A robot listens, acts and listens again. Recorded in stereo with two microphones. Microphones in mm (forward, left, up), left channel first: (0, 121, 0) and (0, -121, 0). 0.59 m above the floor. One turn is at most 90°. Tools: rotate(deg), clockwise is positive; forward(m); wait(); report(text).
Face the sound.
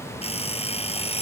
rotate(-25)
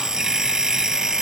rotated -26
report("Facing the alarm clock.")